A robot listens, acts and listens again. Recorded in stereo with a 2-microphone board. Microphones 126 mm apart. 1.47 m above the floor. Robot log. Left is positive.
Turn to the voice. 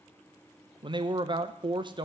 note: The man speaking: about 40° right or 140° right.
cmd yaw -40
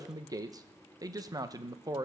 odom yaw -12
note: So it is at 30° right.
cmd yaw -30
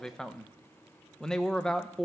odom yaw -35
end: Found it: a man speaking, straight ahead.